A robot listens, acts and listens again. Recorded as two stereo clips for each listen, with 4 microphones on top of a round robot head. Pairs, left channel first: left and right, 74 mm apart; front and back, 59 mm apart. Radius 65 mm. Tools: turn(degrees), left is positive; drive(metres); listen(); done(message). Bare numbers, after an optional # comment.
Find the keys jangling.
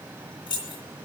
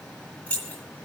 # The keys jangling: 70° left.
turn(70)
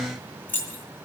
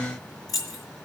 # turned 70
# The keys jangling is now 25° left.
turn(25)
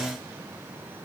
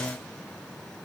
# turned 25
listen()
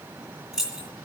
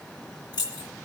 done("Found it: keys jangling, straight ahead, 2 to 4 m away.")